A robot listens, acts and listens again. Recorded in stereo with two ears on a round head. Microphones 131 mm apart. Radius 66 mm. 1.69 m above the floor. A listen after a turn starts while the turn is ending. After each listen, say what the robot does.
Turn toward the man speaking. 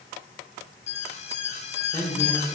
Turn 30° left.
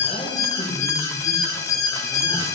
Keep listening.
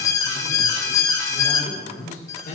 Turn 125° left.
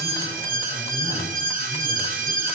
Keep listening.
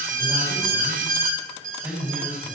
Turn 10° right.
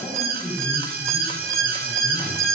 Found it: a man speaking, straight ahead, over 4 m away.